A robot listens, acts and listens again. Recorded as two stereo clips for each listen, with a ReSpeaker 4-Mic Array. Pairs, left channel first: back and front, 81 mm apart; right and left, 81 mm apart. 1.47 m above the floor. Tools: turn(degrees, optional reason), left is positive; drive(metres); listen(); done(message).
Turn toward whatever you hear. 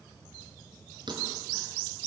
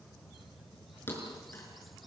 turn(degrees=-25, reason="The thud: 25° right.")
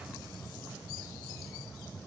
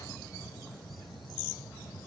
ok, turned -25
done("Facing where the thud came from. I can't hear it now.")